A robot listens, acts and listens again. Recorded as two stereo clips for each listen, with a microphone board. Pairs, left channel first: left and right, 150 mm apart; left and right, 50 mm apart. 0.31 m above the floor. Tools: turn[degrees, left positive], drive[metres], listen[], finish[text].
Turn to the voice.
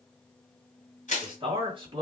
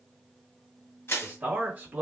Thought: The man speaking: about 35° right or 145° right.
Action: turn[-35]
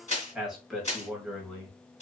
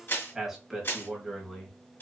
Action: finish[Found it: a man speaking, straight ahead, 1 to 2 m away.]